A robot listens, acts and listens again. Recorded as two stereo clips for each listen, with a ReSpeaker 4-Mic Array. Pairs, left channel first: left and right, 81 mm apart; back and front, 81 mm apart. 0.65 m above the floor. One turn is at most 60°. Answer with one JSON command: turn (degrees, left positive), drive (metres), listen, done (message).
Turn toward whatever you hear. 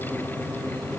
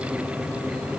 {"listen": true}
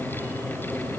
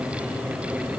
{"listen": true}
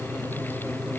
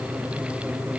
{"done": "I can't make out anything."}